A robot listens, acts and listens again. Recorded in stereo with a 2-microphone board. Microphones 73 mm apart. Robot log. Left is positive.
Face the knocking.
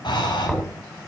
cmd yaw +30
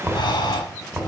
note: So it is at 20° right.
cmd yaw -20
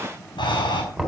end: Found it: knocking, straight ahead, over 4 m away.